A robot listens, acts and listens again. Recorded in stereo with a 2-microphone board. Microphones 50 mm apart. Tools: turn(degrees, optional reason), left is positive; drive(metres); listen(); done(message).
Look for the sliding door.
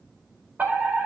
listen()
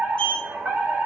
turn(degrees=25, reason="The sliding door: about 25° left or 155° left.")
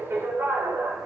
listen()
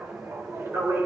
listen()
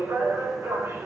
done("I heard a sliding door, but can't make it out now. It was about straight ahead or 130° left.")